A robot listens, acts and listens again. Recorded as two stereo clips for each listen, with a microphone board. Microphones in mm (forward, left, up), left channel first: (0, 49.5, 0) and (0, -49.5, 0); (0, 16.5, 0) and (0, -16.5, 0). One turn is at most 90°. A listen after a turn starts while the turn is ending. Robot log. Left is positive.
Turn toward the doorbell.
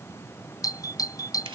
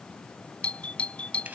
note: The doorbell: about 40° left or 140° left.
cmd yaw +40
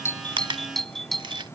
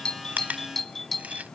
end: Facing the doorbell.